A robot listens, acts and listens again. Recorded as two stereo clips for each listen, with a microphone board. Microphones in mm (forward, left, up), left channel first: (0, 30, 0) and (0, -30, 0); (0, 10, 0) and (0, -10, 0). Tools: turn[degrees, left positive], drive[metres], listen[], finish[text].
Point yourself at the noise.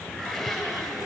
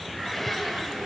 Action: turn[30]
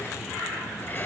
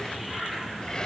Thought: So it is at 140° left.
Action: turn[140]
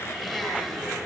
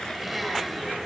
Action: finish[Found it: a blender, straight ahead.]